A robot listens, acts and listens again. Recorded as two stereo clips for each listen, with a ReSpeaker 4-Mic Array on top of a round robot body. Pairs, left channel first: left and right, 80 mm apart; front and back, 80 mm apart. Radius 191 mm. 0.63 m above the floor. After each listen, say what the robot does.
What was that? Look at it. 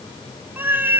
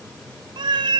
Turn 155° right.
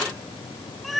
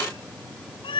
Facing the cat meowing.